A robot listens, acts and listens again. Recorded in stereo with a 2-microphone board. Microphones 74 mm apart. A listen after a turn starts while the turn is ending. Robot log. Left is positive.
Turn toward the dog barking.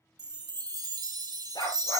cmd yaw +90
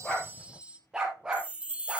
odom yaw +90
note: So it is at 15° right.
cmd yaw -15
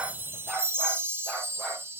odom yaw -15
end: Facing the dog barking, over 4 m away.